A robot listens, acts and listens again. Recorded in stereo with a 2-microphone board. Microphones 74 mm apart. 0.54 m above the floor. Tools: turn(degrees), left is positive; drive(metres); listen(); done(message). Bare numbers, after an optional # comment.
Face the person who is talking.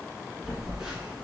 listen()
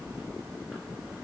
listen()
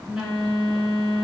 done("I can't make out anyone speaking, only a phone buzzing.")